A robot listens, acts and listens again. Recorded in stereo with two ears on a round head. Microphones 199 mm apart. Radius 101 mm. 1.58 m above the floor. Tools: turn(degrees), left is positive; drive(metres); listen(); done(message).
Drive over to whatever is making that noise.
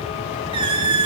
turn(degrees=-25)
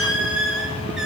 drive(metres=1.0)
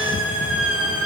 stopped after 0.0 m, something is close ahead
done("Blocked. The squeak is further on, straight ahead.")